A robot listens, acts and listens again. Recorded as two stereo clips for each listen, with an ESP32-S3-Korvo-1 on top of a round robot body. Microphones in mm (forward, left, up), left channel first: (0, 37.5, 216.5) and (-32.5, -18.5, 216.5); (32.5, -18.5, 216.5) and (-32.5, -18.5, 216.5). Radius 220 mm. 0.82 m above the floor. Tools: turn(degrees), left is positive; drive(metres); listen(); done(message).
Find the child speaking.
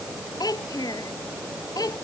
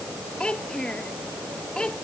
turn(degrees=80)
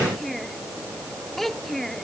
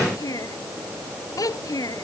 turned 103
turn(degrees=-25)
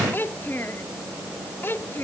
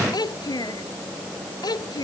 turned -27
done("Found it: a child speaking, straight ahead.")